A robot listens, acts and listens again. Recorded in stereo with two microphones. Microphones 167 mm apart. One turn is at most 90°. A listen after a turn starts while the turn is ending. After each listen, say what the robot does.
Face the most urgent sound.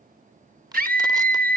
Turn 60° right.
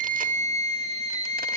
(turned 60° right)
Turn 45° right.
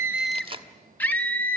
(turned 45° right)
Turn 10° left.
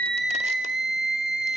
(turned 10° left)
Found it: a scream, straight ahead.